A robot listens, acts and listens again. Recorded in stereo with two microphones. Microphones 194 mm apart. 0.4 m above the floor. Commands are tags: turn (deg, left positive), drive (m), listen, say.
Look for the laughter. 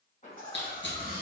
<turn deg="50"/>
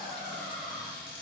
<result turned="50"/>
<turn deg="45"/>
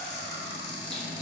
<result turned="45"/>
<listen/>
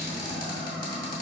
<listen/>
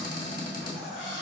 <say>Facing the laughter.</say>